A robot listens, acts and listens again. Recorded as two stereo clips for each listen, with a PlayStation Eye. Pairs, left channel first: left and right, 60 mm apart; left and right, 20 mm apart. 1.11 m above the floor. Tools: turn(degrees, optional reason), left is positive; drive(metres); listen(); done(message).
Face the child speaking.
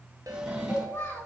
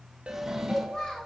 turn(degrees=40, reason="The child speaking: about 40° left or 140° left.")
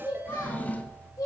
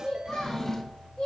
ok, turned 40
turn(degrees=110, reason="So it is at 110° left.")
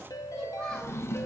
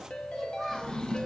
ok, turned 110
turn(degrees=15, reason="The child speaking is now 15° left.")
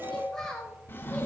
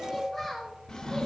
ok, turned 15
turn(degrees=10, reason="The child speaking is now 10° left.")
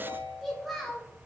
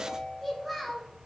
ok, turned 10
done("Facing the child speaking, 2 to 4 m away.")